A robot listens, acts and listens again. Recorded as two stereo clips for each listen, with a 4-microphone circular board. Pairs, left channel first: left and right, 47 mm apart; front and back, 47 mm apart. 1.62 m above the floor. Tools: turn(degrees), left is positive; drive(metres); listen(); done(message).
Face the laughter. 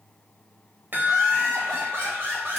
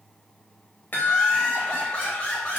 turn(degrees=-55)
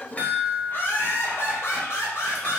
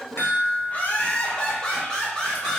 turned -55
turn(degrees=85)
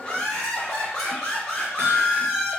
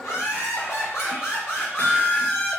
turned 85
turn(degrees=15)
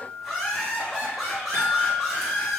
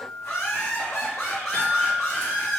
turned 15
done("Facing the laughter, 1 to 2 m away.")